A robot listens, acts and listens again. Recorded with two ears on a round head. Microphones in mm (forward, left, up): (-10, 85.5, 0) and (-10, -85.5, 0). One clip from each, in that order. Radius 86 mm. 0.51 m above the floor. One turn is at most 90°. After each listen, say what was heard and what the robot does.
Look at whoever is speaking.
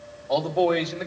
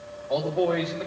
The man speaking: about 35° left or 145° left. Turn 35° left.
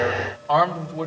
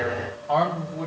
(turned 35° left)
So it is at 125° left. Turn 90° left.
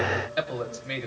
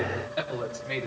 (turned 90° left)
The man speaking is now 40° left. Turn 40° left.
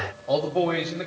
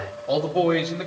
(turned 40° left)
Facing the man speaking, 2 to 4 m away.